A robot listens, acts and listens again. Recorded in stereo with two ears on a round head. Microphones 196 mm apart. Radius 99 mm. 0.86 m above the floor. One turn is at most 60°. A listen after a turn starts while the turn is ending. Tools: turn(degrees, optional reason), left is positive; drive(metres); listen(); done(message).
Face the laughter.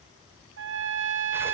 listen()
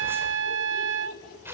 turn(degrees=40, reason="The laughter: about 40° left or 140° left.")
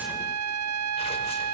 listen()
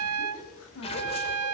turn(degrees=60, reason="So it is at 95° left.")
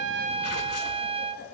turn(degrees=35, reason="Nothing new. It was at 35° left.")
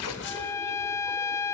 listen()
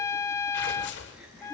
done("Facing where the laughter came from. I can't hear it now.")